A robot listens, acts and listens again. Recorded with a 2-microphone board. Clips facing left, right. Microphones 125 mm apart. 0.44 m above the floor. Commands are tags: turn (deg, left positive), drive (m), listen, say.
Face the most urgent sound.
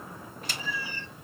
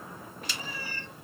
<listen/>
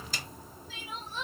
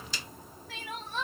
<turn deg="-90"/>
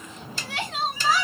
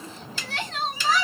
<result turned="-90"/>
<turn deg="10"/>
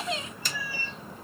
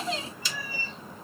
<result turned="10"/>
<say>Facing the crying, 1 to 2 m away.</say>